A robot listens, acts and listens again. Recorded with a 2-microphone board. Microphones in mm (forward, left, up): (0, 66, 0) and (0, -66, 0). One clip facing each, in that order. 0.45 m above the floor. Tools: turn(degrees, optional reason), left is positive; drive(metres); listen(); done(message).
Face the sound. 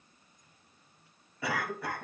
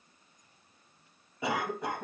turn(degrees=-20, reason="The cough: about 20° right or 160° right.")
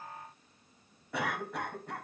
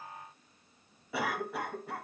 done("Facing the cough.")